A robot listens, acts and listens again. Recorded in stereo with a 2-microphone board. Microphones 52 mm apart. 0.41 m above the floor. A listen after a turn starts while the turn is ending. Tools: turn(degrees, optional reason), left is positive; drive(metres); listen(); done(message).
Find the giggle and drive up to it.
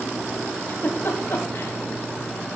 turn(degrees=60, reason="The giggle: about 60° left or 120° left.")
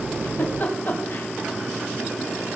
turn(degrees=55, reason="So it is at 55° left.")
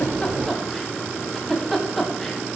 drive(metres=1.0)
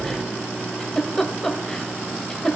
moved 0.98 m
turn(degrees=15, reason="The giggle is now 15° left.")
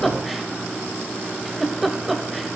drive(metres=1.0)
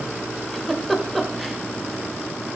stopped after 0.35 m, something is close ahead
done("Arrived at the giggle, straight ahead.")